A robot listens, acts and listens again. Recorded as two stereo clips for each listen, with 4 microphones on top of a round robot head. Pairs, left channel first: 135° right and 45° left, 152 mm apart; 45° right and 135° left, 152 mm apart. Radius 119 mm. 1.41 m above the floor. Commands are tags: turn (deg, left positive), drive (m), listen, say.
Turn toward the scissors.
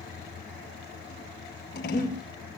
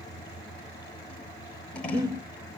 <turn deg="-130"/>
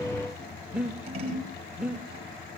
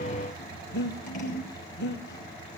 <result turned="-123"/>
<say>Facing the scissors, over 4 m away.</say>